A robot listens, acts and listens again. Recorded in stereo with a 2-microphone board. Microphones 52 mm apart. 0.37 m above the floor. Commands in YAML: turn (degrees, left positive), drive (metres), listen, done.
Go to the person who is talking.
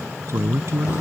turn: -60
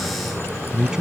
turn: -10
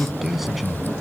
drive: 1.0
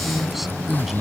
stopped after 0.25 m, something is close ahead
done: "Blocked. The man speaking is further on, straight ahead."